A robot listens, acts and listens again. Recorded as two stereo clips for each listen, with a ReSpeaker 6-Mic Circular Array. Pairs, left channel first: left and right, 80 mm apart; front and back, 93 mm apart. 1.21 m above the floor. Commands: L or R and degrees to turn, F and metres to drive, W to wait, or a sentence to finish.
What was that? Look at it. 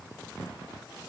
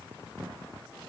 W
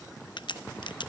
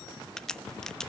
L85
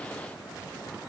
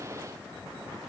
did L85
I heard a crack from this way, but can't make it out now.